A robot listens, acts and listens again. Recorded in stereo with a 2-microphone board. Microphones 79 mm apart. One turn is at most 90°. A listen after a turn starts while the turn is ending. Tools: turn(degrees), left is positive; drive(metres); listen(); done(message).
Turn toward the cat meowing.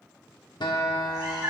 turn(degrees=-65)
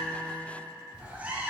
turn(degrees=-25)
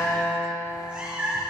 turn(degrees=-20)
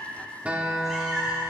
turn(degrees=-10)
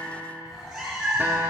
turn(degrees=-10)
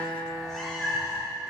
done("Found it: a cat meowing, straight ahead.")